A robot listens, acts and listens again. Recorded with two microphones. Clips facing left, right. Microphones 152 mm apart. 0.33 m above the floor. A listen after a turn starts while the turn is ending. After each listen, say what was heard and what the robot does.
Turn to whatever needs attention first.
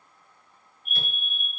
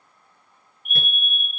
The fire alarm: about 20° right or 160° right. Turn 20° right.
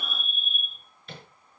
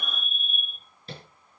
Found it: a fire alarm, straight ahead, over 4 m away.